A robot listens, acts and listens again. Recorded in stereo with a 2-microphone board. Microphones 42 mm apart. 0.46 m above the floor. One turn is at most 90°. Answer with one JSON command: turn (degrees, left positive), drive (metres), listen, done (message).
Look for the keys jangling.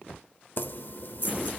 {"turn": 55}
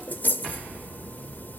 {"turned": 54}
{"turn": 55}
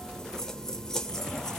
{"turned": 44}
{"turn": 10}
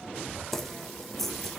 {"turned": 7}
{"done": "Facing the keys jangling, under 1 m away."}